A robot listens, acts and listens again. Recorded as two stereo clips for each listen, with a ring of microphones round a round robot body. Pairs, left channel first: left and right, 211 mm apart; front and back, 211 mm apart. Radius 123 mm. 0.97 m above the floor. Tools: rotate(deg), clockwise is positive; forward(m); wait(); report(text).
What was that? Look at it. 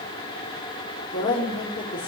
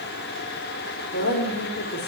rotate(-25)
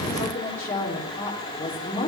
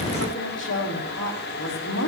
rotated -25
rotate(-10)
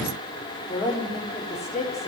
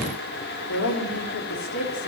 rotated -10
report("Facing the woman speaking.")